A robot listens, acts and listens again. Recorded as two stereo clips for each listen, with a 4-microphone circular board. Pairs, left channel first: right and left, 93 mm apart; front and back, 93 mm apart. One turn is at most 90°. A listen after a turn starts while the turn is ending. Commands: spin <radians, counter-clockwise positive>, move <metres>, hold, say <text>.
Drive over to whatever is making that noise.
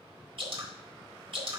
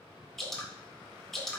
spin 1.48
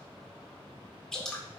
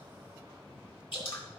move 1.0
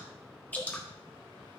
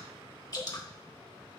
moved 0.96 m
spin -0.35
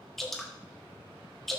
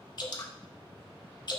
move 1.0
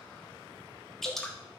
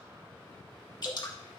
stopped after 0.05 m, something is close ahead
say Arrived at the dripping, straight ahead.